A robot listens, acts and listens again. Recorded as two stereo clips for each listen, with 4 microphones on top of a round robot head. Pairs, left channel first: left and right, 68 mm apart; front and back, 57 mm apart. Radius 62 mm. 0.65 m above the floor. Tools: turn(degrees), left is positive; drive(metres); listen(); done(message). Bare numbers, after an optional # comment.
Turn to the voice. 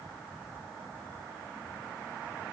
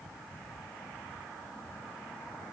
listen()
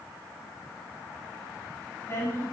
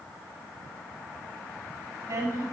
# The woman speaking: 145° left.
turn(145)
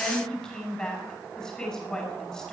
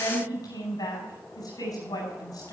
# The woman speaking is now 10° left.
turn(10)
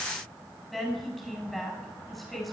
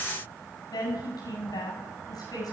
done("Found it: a woman speaking, straight ahead, over 4 m away.")